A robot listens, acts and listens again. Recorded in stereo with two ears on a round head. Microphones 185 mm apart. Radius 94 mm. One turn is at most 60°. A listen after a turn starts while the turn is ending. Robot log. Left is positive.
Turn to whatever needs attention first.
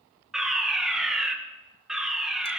cmd yaw +30
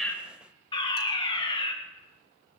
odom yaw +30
note: So it is at 155° left.
cmd yaw +60
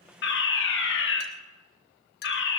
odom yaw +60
note: The fire alarm is now 100° left.
cmd yaw +60
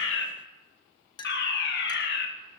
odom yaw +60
note: The fire alarm is now 60° left.
cmd yaw +60
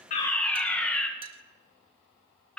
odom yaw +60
end: Found it: a fire alarm, straight ahead.